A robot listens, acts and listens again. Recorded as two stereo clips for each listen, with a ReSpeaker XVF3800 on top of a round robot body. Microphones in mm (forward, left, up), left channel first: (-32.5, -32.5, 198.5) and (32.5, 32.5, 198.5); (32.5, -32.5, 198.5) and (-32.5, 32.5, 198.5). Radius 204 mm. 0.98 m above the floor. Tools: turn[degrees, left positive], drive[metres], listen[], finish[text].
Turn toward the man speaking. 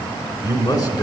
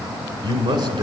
Thought: The man speaking: 170° left.
Action: turn[170]
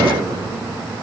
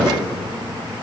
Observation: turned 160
Thought: The man speaking is now 10° left.
Action: turn[10]
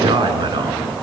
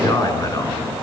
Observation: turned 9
Action: finish[Found it: a man speaking, straight ahead, over 4 m away.]